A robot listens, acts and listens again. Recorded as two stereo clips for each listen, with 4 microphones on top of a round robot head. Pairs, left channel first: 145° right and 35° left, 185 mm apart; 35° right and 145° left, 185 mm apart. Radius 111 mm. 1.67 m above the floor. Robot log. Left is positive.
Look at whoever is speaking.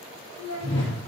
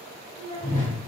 note: The child speaking: 35° left.
cmd yaw +35
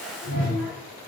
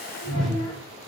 cmd idle
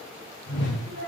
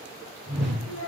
end: Found it: a child speaking, straight ahead.